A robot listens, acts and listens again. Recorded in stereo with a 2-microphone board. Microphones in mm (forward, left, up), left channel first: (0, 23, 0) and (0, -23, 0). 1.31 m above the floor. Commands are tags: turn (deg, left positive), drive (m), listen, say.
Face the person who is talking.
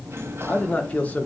<turn deg="30"/>
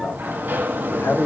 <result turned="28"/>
<turn deg="120"/>
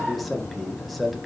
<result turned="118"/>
<say>Facing the man speaking, 1 to 2 m away.</say>